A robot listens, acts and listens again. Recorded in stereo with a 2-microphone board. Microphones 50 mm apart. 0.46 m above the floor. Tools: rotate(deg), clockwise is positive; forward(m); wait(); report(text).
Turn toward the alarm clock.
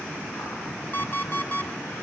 rotate(-35)
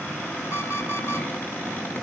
wait()
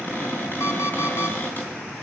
wait()
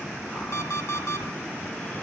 rotate(-110)
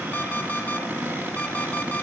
wait()
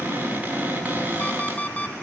rotate(-35)
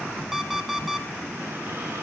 report("Found it: an alarm clock, straight ahead.")